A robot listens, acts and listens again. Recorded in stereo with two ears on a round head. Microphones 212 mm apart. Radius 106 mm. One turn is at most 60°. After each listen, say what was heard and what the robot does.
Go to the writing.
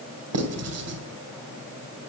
The writing: about 70° right or 110° right. Turn 60° right.
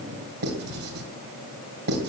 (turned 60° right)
So it is at 45° right. Turn 45° right.
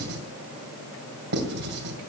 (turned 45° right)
The writing is now 50° right. Turn 50° right.
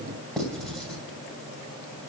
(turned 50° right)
Drive 1.0 m forward.
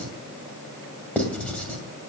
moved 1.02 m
Drive 1.0 m forward.
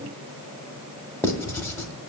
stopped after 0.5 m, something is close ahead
The writing is now 15° left. Turn 15° left.
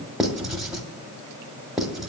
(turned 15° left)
Arrived at the writing, straight ahead.